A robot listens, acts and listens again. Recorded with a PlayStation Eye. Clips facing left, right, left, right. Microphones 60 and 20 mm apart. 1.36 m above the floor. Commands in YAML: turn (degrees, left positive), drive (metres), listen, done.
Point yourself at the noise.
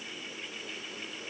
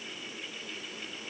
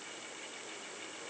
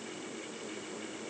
listen: true
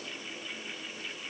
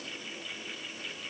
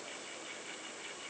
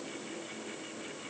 listen: true
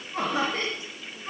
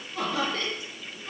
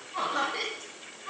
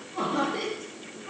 turn: 30
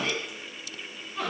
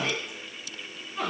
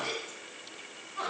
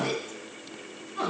done: "Found it: laughter, straight ahead, 2 to 4 m away."